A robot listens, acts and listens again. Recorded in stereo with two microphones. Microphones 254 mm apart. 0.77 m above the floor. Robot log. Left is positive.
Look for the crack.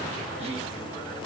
cmd idle
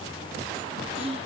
cmd idle
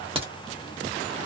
note: The crack: about 20° right or 160° right.
cmd yaw -20
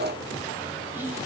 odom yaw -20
cmd idle
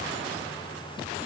end: I heard a crack, but can't make it out now. It was about straight ahead or 140° right.